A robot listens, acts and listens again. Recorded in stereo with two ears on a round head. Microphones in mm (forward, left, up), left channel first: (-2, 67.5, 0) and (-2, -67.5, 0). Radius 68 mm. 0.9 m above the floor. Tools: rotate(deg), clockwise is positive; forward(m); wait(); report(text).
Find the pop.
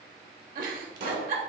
rotate(65)
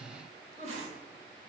wait()
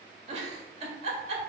report("I heard a pop, but can't make it out now. It was about straight ahead or 50° right.")